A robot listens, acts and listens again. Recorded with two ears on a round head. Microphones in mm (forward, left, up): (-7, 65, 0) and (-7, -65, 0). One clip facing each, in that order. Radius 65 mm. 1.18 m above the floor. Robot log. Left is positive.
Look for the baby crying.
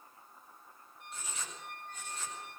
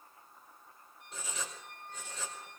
cmd idle
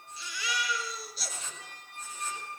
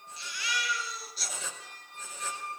cmd yaw +90
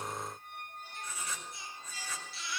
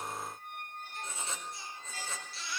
end: Found it: a baby crying, straight ahead, over 4 m away.